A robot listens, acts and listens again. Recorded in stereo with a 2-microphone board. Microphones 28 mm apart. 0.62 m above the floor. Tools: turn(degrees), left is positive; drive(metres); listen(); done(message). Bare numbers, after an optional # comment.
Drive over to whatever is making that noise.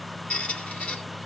# The squeak: about 65° left or 115° left.
turn(65)
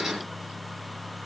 listen()
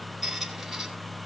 drive(1.0)
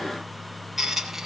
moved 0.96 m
# The squeak is now 10° right.
turn(-10)
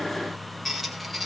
drive(1.0)
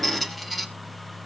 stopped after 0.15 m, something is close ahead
done("Arrived at the squeak, straight ahead.")